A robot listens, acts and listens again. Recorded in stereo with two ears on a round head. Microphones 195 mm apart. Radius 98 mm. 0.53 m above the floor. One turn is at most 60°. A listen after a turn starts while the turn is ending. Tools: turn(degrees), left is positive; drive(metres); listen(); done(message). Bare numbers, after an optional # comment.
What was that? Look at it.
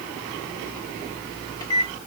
# The microwave: about 20° left or 160° left.
turn(20)
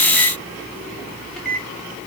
done("Found it: a microwave, straight ahead, 1 to 2 m away.")